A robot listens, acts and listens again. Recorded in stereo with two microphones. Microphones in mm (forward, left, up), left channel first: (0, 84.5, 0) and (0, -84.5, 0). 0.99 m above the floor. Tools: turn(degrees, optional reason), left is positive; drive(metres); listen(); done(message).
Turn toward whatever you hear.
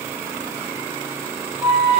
turn(degrees=30)
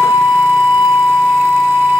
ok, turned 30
turn(degrees=150, reason="So it is at 150° left.")
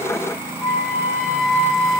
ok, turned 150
turn(degrees=-15, reason="The flute is now 15° right.")
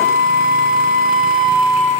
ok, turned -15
done("Facing the flute.")